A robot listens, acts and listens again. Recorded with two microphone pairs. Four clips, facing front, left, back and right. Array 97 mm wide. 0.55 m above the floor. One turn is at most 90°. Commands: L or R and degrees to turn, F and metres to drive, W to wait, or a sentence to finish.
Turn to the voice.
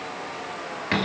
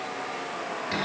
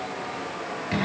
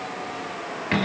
W
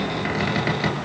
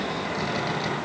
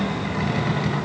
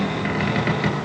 W
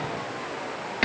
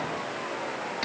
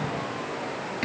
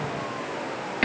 I can't make out anyone speaking, only a cupboard door.